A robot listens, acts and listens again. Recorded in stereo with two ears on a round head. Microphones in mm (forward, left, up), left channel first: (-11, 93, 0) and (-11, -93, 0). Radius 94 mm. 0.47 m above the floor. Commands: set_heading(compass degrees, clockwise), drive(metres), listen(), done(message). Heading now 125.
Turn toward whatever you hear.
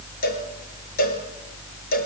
set_heading(80)
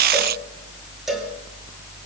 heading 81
listen()
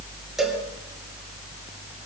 listen()
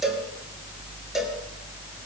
done("Facing the cowbell.")